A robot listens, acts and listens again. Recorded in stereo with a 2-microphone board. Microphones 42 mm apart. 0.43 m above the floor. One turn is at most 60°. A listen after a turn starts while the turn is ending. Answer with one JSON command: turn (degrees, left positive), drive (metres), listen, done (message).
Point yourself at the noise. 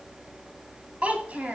{"turn": -40}
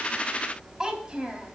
{"turn": -30}
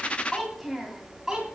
{"turn": -15}
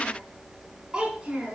{"turn": -25}
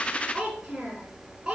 {"turn": -20}
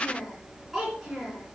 {"done": "Facing the child speaking."}